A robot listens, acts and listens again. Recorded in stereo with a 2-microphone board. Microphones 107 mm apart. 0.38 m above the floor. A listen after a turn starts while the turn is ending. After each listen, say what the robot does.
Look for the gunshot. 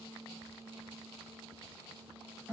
Keep listening.
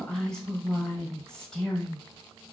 Keep listening.
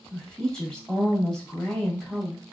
I can't make out a gunshot, only a woman speaking.